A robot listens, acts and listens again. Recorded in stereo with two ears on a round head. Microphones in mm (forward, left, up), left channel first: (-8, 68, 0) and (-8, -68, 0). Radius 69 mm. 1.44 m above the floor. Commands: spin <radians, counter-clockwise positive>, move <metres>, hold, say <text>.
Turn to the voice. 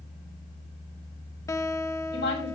spin 1.57
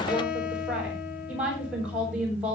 say Facing the woman speaking, over 4 m away.